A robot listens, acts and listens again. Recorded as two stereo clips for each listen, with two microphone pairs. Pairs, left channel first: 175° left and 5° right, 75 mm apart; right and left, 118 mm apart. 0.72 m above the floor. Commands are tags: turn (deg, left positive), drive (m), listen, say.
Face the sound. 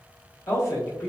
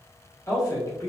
<turn deg="-140"/>
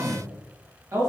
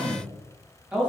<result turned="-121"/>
<turn deg="10"/>
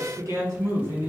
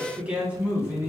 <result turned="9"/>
<turn deg="25"/>
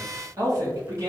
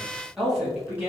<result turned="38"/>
<turn deg="10"/>
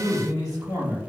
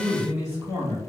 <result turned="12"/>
<turn deg="10"/>
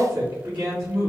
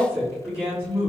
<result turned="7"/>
<say>Facing the man speaking, 1 to 2 m away.</say>